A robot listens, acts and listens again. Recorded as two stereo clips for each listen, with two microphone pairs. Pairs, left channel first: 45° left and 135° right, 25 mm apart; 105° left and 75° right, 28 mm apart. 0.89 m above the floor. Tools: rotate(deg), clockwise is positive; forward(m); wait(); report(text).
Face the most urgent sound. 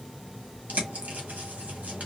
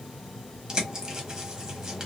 wait()
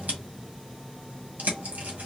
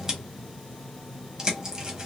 wait()
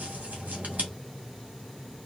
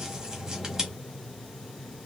report("I can't make out anything urgent to turn to.")